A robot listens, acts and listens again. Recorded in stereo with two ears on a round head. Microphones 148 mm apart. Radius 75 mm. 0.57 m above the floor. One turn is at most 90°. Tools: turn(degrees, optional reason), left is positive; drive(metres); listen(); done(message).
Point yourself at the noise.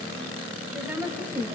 turn(degrees=-30)
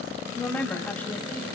turn(degrees=10, reason="So it is at 10° left.")
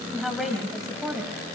done("Facing the woman speaking.")